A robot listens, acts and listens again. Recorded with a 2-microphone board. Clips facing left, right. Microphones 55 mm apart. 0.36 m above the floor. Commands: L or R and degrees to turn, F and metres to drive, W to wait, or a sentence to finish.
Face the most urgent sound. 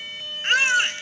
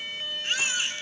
L60
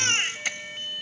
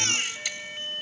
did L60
L45
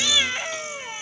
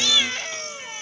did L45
L15
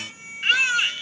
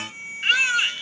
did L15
Found it: a baby crying, straight ahead, under 1 m away.